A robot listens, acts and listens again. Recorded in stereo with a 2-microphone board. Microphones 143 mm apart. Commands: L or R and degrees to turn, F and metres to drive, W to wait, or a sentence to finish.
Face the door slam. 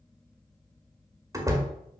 R20
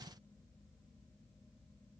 W
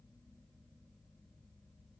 I heard a door slam, but can't make it out now. It was about straight ahead or 140° right.